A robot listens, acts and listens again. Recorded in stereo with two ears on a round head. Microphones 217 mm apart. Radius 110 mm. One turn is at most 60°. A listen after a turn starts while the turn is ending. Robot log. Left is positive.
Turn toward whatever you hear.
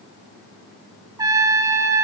note: The trumpet: about 15° right or 165° right.
cmd yaw -15
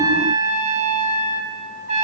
note: So it is at 150° right.
cmd yaw -60
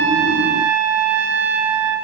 note: The trumpet is now 100° right.
cmd yaw -60
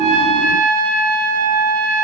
note: The trumpet is now 60° right.
cmd yaw -60
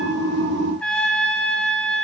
end: Facing the trumpet.